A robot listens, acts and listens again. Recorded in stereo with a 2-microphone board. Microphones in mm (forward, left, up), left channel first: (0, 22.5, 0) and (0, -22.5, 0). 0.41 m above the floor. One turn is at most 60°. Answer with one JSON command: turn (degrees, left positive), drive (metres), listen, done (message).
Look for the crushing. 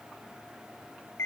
{"listen": true}
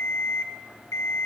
{"listen": true}
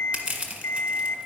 {"turn": -30}
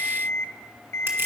{"listen": true}
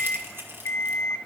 {"turn": -60}
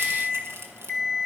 {"turn": -60}
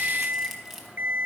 {"done": "Found it: crushing, straight ahead."}